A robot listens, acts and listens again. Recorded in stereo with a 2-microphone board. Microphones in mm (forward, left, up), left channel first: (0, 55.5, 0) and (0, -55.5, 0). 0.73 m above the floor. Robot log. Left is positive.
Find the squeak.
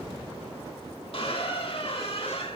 note: The squeak: about 60° left or 120° left.
cmd yaw +60
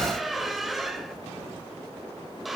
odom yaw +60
end: Found it: a squeak, straight ahead.